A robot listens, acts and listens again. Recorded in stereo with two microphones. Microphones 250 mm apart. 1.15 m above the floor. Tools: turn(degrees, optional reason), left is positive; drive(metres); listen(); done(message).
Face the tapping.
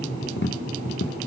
turn(degrees=45, reason="The tapping: about 45° left or 135° left.")
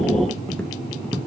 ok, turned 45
done("Found it: tapping, straight ahead, under 1 m away.")